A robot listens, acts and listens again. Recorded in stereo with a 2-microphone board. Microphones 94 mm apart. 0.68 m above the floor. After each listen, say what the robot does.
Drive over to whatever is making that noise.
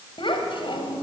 Turn 60° left.
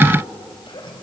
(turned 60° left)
Turn 60° left.
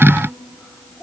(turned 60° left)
Drive 1.0 m forward.
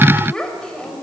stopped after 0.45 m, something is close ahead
Turn 10° left.
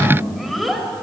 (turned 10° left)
Blocked. The child speaking is further on, straight ahead.